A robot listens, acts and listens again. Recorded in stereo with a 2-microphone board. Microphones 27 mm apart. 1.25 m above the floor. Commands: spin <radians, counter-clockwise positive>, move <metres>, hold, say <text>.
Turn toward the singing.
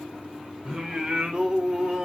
spin -0.44
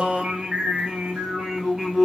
spin -0.26
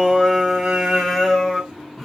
spin -0.52
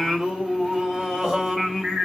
spin -0.44
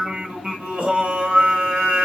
spin -2.27
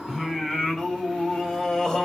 spin 0.44
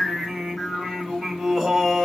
say Facing the singing, 1 to 2 m away.